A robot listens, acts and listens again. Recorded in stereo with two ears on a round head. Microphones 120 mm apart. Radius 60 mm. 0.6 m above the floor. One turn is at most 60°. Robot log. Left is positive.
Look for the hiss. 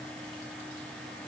cmd idle
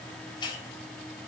note: The hiss: about 35° left or 145° left.
cmd yaw +35
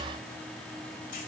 cmd idle
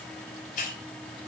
note: So it is at 110° left.
cmd yaw +60
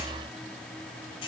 note: The hiss is now 40° left.
cmd yaw +40
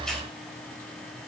cmd idle
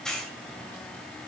end: Facing the hiss.